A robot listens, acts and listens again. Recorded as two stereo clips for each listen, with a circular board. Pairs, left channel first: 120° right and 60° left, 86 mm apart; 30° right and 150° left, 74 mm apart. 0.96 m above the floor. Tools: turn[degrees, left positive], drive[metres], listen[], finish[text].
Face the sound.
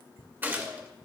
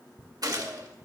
Thought: The gunshot: 125° left.
Action: turn[125]
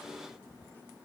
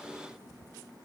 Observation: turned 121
Action: finish[I heard a gunshot from this way, but can't make it out now.]